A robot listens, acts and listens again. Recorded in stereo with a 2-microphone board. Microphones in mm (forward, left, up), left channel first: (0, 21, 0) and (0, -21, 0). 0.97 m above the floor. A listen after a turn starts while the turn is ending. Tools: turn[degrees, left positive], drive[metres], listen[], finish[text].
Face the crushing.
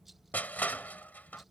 Thought: The crushing: about 45° left or 135° left.
Action: turn[45]
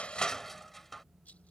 Action: finish[Facing the crushing.]